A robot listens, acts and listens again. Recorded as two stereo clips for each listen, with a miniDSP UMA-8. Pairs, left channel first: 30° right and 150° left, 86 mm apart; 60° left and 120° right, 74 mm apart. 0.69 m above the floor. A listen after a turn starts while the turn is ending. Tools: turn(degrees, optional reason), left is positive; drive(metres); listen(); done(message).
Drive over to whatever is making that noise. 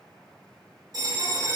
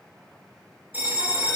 turn(degrees=175, reason="The bell: 175° left.")
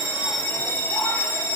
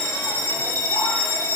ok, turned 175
turn(degrees=30, reason="The bell is now 30° left.")
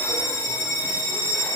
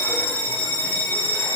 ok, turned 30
drive(metres=1.0)
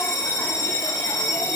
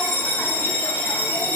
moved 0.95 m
drive(metres=1.0)
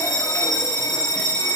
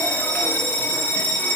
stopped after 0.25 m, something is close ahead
done("I am next to the bell.")